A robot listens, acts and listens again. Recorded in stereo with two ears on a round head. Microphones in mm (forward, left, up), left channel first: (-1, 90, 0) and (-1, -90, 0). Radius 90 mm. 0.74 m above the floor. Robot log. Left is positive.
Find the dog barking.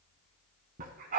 note: The dog barking: about 45° right or 135° right.
cmd yaw -45
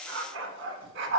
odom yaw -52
note: So it is at 60° right.
cmd yaw -60
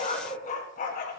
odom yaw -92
note: The dog barking is now 45° left.
cmd yaw +45
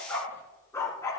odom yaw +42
note: The dog barking is now 15° left.
cmd yaw +15
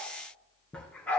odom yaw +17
note: The dog barking is now 10° left.
cmd yaw +10
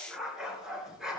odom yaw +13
end: Facing the dog barking.